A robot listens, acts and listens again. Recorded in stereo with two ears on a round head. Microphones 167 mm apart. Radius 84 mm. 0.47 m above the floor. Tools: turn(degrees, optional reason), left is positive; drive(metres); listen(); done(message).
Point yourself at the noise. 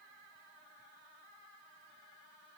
listen()
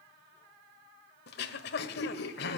turn(degrees=60, reason="The throat clearing: about 60° left or 120° left.")
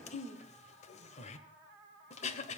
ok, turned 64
turn(degrees=40, reason="So it is at 40° left.")
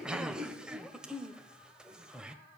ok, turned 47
done("Facing the throat clearing, 1 to 2 m away.")